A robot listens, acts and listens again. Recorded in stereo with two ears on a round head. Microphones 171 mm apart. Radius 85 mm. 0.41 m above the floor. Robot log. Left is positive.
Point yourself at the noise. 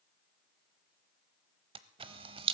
note: The camera shutter: about 30° right or 150° right.
cmd yaw -30
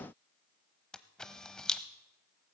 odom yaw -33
end: Found it: a camera shutter, straight ahead.